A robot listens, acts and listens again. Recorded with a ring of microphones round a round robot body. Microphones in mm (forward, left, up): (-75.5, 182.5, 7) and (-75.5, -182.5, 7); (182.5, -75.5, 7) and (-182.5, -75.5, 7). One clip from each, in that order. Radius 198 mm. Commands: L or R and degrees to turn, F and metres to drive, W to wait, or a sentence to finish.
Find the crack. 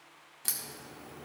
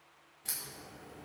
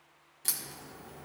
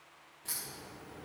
L40
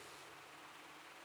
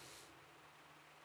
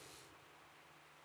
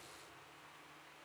Facing where the crack came from. I can't hear it now.